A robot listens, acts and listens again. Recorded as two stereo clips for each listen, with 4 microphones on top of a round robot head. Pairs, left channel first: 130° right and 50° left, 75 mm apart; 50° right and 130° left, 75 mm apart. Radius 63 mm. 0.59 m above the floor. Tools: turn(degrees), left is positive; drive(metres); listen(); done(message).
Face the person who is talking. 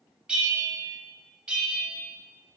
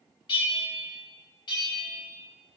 listen()
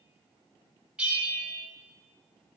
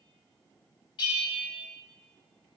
listen()
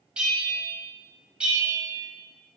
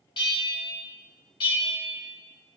done("I can't make out anyone speaking, only a bell.")